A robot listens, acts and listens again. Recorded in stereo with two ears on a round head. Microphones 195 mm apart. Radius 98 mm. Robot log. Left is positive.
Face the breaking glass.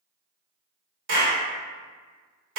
cmd idle
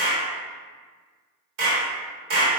cmd idle
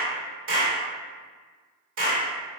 end: I can't make out breaking glass, only a clap.